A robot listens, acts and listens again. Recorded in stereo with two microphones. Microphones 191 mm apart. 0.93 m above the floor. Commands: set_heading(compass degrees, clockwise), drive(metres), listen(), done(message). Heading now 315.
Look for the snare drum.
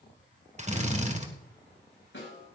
set_heading(225)
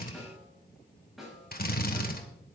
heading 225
done("Found it: a snare drum, straight ahead.")